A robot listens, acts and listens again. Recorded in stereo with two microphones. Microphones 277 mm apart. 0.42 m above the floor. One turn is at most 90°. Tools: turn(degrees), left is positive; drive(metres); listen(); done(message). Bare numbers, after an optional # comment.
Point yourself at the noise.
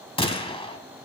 # The gunshot: about 20° left or 160° left.
turn(20)
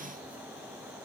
listen()
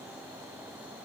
done("I heard a gunshot, but can't make it out now. It was about straight ahead or 140° left.")